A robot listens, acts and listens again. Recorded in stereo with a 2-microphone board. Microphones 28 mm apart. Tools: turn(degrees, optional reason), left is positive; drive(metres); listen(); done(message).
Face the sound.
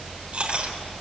turn(degrees=-40, reason="The chewing: about 40° right or 140° right.")
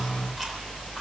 listen()
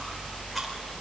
listen()
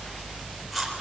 done("Found it: chewing, straight ahead, 2 to 4 m away.")